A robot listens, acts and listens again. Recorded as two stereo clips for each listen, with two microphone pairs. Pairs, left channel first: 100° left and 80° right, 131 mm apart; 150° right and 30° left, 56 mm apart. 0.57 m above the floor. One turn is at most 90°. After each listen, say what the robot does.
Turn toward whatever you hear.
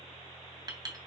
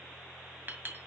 Turn 25° right.
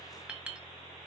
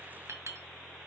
Found it: a clink, straight ahead, 2 to 4 m away.